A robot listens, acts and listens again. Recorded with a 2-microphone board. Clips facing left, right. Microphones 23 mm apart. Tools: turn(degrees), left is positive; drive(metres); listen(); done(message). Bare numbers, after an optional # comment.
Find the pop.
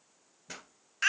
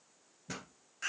turn(30)
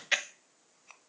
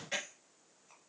listen()
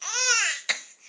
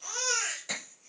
done("I heard a pop, but can't make it out now. It was about 25° right or 145° left.")